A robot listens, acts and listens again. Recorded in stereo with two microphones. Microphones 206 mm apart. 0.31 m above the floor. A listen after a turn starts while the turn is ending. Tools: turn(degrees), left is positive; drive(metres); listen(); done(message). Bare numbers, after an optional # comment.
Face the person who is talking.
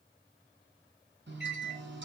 listen()
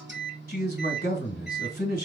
# The man speaking: about 45° left or 135° left.
turn(45)
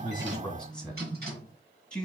done("Facing the man speaking.")